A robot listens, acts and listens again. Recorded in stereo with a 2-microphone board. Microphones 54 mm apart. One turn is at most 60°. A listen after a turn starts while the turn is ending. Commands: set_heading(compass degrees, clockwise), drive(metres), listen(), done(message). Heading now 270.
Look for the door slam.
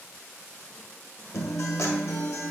listen()
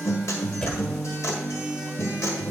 set_heading(255)
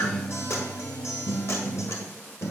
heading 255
listen()
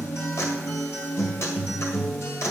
done("I heard a door slam, but can't make it out now. It was about straight ahead or 150° left.")